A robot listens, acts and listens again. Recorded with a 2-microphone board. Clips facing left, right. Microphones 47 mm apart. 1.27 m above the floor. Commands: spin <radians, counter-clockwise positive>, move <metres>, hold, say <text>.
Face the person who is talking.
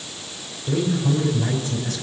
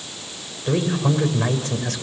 spin -1.05
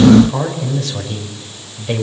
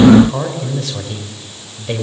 say Found it: a man speaking, straight ahead, over 4 m away.